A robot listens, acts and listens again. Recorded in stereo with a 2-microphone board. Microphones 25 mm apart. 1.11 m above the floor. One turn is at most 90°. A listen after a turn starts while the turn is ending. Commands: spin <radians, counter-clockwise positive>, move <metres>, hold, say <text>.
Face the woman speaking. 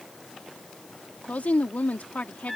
spin 1.57
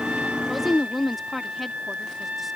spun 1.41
say Found it: a woman speaking, straight ahead.